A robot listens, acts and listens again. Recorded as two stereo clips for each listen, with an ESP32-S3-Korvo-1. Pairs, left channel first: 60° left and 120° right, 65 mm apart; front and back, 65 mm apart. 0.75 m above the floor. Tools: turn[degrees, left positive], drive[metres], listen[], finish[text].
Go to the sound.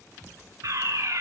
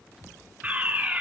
Thought: The fire alarm: 115° right.
Action: turn[-115]
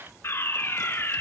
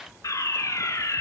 Thought: The fire alarm is now 20° left.
Action: turn[20]
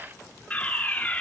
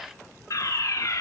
Action: drive[1.0]
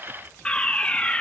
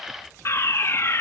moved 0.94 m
Action: drive[1.0]
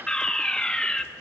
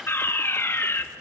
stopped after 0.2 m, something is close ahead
Thought: The fire alarm is now 10° right.
Action: turn[-10]
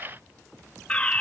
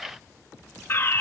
Action: finish[Arrived at the fire alarm, straight ahead.]